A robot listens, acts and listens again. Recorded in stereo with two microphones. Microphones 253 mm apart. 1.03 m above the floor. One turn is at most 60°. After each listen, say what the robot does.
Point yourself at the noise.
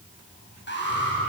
Turn 45° left.
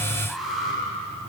Found it: an alarm, straight ahead.